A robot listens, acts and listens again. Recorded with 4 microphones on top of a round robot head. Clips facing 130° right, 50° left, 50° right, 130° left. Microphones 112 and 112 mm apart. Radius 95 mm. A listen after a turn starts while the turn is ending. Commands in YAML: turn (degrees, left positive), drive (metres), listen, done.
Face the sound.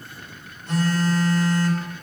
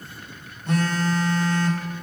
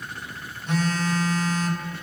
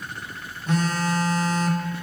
turn: 80
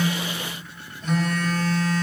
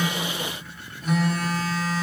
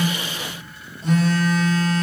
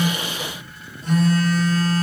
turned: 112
turn: -35
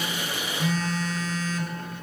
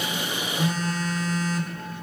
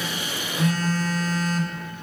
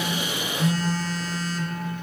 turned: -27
done: "Found it: a phone buzzing, straight ahead, under 1 m away."